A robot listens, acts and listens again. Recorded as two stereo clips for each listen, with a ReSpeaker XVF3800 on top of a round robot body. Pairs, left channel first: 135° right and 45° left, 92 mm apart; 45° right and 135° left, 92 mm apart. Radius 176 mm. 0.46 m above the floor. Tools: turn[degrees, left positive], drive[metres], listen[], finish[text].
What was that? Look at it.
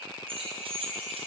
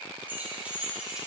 Thought: The keys jangling: 55° left.
Action: turn[55]
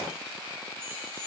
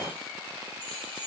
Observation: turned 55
Action: listen[]
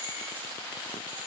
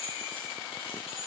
Thought: The keys jangling is now 30° right.
Action: turn[-30]
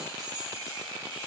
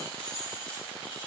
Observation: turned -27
Action: finish[Facing the keys jangling, 2 to 4 m away.]